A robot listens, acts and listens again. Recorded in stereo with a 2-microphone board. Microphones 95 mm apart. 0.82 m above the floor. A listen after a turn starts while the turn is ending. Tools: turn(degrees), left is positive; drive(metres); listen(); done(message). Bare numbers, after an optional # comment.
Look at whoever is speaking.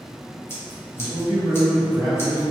turn(-30)
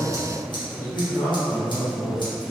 # So it is at 15° left.
turn(15)
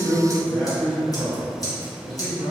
done("Found it: a man speaking, straight ahead, 1 to 2 m away.")